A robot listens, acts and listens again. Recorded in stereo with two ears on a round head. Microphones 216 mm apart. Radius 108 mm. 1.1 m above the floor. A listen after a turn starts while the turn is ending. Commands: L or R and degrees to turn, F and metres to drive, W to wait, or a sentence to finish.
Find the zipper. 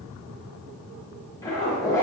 L30
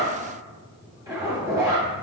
R15
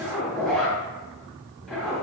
Found it: a zipper, straight ahead.